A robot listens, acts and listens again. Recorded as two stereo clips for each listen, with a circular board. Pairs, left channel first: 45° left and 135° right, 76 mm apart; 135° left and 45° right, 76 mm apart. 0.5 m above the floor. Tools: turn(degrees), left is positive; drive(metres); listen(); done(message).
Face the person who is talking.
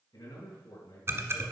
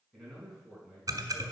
turn(degrees=50)
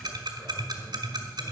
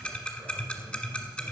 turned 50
listen()
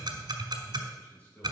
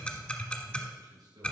turn(degrees=-20)
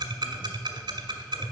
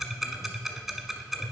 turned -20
listen()
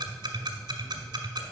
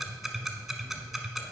listen()
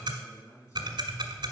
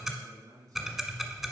done("Found it: a man speaking, straight ahead, 2 to 4 m away.")